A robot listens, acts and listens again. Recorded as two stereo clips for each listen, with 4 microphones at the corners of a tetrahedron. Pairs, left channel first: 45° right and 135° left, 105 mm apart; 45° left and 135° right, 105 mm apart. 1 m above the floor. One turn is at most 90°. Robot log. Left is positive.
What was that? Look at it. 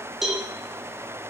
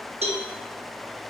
note: The cowbell: 135° right.
cmd yaw -90
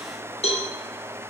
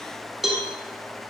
note: The cowbell is now 50° right.
cmd yaw -50
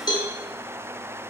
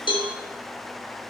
end: Found it: a cowbell, straight ahead, under 1 m away.